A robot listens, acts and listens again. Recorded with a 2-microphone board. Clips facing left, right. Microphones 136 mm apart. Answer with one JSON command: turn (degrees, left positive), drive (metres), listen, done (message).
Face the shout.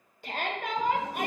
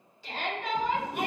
{"turn": 55}
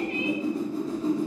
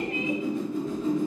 {"listen": true}
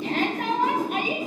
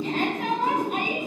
{"turn": 70}
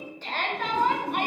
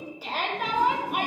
{"turn": -10}
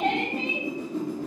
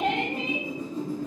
{"done": "Facing the shout, 1 to 2 m away."}